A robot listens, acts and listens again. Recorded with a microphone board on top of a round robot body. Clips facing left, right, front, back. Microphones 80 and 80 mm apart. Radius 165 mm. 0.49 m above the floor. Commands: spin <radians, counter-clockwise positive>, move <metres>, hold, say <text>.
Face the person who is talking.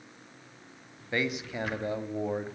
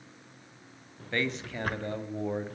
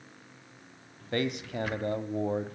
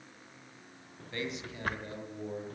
spin 0.17
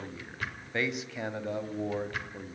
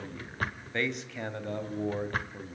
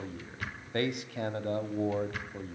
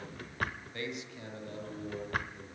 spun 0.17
say Facing the man speaking.